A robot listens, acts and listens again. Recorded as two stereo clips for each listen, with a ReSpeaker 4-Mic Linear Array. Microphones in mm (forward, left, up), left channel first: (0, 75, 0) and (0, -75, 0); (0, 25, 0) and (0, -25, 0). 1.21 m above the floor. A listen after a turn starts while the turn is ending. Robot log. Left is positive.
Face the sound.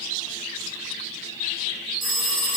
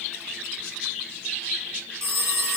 note: The phone ringing: about 60° right or 120° right.
cmd yaw -60
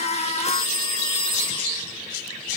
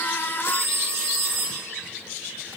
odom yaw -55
note: So it is at 65° right.
cmd yaw -65
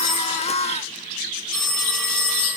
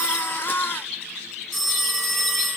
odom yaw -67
end: Found it: a phone ringing, straight ahead.